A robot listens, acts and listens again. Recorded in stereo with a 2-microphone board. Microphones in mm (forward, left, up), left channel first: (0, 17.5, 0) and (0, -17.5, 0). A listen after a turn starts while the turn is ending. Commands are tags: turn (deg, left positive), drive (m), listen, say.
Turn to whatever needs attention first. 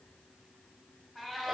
<listen/>
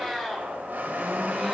<listen/>
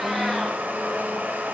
<say>I can't make out anything urgent, only a blender and a cat meowing.</say>